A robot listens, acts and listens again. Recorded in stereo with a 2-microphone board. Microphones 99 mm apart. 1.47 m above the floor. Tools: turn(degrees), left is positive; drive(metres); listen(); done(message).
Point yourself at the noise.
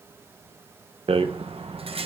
turn(degrees=-70)
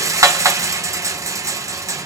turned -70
turn(degrees=-35)
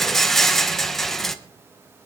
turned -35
done("Facing the rattle.")